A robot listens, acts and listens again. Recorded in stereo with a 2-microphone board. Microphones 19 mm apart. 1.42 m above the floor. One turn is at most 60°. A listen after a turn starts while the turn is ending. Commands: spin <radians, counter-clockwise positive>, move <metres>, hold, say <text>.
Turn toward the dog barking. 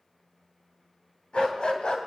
spin 1.05
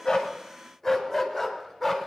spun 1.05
spin 0.17
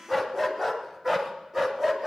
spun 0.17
spin -0.26
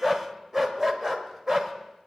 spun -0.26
spin -0.26
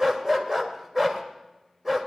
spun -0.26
say Facing the dog barking, 1 to 2 m away.